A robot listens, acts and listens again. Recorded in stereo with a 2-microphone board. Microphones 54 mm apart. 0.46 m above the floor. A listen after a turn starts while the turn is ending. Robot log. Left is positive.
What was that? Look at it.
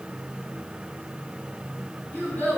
note: The child speaking: about 35° left or 145° left.
cmd yaw +35
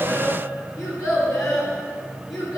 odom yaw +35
note: So it is at 110° left.
cmd yaw +110
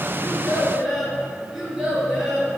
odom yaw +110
end: Found it: a child speaking, straight ahead.